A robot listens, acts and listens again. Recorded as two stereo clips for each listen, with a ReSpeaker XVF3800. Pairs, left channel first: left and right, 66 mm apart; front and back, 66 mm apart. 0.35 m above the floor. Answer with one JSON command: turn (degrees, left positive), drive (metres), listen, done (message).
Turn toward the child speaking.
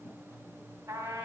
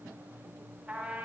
{"listen": true}
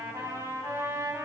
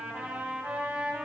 {"listen": true}
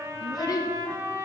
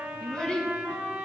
{"turn": 75}
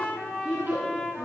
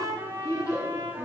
{"turn": -30}
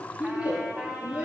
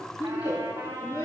{"turn": -20}
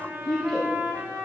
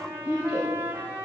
{"done": "Found it: a child speaking, straight ahead."}